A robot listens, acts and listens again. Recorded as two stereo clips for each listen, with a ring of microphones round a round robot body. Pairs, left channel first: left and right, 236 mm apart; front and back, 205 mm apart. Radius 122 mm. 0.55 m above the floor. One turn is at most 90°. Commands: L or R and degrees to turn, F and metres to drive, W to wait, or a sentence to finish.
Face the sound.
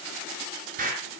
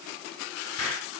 R30
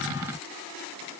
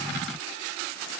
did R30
I heard an explosion from this way, but can't make it out now.